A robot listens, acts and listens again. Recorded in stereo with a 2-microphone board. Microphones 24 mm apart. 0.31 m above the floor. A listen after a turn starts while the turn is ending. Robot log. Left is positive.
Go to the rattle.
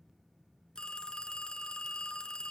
cmd idle
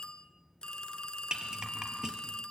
note: The rattle: about 30° right or 150° right.
cmd yaw -30
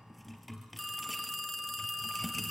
cmd fwd 1.0
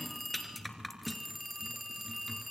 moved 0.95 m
cmd fwd 1.0
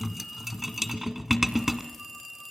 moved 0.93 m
note: The rattle is now 10° right.
cmd yaw -10
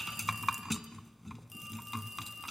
cmd fwd 1.0
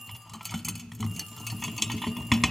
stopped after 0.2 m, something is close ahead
end: Arrived at the rattle, straight ahead.